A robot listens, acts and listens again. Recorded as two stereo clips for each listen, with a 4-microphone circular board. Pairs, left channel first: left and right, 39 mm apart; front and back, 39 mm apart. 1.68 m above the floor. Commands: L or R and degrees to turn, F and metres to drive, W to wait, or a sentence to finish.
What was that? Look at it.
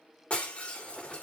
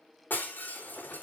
L35
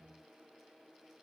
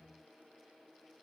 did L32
Facing where the breaking glass came from. I can't hear it now.